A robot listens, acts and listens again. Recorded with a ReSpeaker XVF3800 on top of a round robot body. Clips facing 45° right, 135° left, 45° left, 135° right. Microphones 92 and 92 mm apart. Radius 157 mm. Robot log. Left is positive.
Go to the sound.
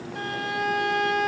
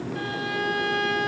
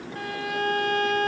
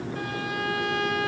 cmd fwd 1.0
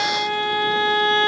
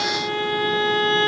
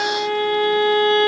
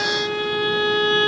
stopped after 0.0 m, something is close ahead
end: Blocked. The violin is further on, straight ahead.